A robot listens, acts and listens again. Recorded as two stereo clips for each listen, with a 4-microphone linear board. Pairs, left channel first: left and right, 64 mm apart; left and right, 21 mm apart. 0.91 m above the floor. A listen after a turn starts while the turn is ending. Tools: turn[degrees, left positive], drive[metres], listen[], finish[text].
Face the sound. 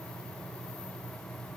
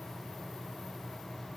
Action: listen[]
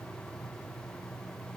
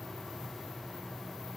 Action: listen[]
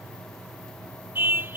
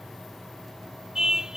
Thought: The car horn: about 35° right or 145° right.
Action: turn[-35]
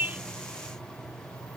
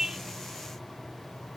Action: listen[]
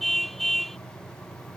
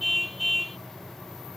Action: finish[Facing the car horn.]